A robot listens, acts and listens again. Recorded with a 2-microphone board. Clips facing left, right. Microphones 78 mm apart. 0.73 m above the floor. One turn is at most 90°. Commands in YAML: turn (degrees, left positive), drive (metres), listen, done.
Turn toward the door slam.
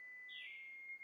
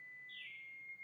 listen: true
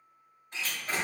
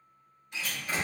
turn: 35
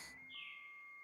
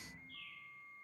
listen: true
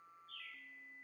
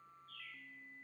done: "I heard a door slam, but can't make it out now. It was about straight ahead or 110° left."